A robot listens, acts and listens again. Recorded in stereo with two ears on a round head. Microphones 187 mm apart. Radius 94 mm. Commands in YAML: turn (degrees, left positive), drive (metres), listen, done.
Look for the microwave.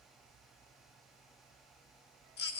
listen: true
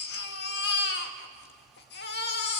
listen: true
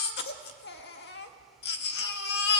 done: "I can't make out a microwave to turn to."